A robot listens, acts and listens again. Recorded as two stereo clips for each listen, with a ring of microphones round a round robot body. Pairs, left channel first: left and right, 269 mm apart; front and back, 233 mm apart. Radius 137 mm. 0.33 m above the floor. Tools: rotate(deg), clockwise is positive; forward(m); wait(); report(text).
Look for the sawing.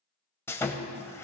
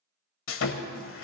rotate(-10)
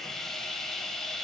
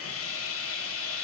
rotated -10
report("Facing the sawing, 1 to 2 m away.")